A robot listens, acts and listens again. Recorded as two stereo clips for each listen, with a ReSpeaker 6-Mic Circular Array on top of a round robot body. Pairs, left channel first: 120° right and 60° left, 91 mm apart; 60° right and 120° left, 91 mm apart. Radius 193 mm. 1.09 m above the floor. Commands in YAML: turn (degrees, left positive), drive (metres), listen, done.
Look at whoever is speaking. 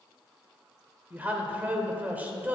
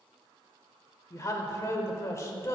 turn: -10
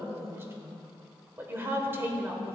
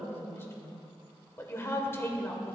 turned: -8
done: "Facing the woman speaking, 1 to 2 m away."